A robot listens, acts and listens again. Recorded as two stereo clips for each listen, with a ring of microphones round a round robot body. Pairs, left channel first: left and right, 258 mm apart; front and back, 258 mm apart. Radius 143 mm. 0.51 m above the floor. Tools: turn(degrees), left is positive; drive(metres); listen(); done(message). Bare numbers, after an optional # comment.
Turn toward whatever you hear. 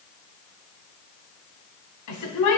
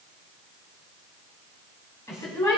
# The woman speaking: 80° left.
turn(80)
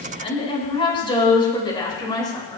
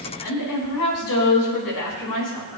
# The woman speaking is now 15° left.
turn(15)
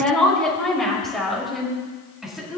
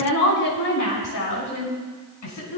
done("Found it: a woman speaking, straight ahead.")